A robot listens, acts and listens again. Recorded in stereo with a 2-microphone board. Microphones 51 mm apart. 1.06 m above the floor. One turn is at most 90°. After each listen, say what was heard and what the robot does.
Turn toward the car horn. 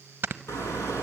The car horn: about 70° left or 110° left. Turn 70° left.
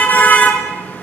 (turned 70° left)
So it is at 40° left. Turn 40° left.
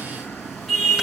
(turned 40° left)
Facing the car horn, over 4 m away.